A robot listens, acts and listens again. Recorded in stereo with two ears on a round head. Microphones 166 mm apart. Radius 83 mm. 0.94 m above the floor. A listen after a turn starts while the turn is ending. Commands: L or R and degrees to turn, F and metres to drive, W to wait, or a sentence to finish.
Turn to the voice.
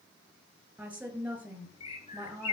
R30
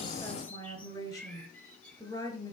L20
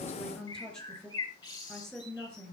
Facing the woman speaking.